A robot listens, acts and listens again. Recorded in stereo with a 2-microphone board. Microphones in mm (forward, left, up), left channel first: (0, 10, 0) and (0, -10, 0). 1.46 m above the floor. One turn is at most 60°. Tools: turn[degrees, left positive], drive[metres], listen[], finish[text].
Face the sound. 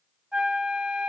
Action: turn[-60]
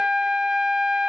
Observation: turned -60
Thought: So it is at 40° right.
Action: turn[-40]
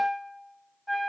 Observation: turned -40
Action: finish[Facing the flute, under 1 m away.]